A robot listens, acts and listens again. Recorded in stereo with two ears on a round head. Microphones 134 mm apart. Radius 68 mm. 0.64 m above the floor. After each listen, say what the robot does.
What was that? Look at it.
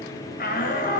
Turn 60° left.
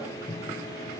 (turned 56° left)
Keep listening.
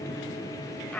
Found it: a shout, straight ahead, 2 to 4 m away.